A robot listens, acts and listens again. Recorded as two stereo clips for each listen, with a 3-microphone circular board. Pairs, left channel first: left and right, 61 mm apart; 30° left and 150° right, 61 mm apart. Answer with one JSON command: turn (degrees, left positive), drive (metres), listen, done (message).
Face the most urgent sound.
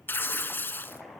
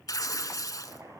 {"listen": true}
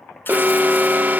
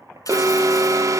{"turn": -145}
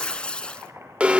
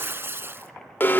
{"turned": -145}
{"turn": -20}
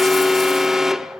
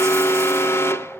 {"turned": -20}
{"turn": -10}
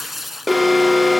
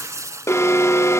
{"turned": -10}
{"done": "Found it: an alarm, straight ahead, 1 to 2 m away."}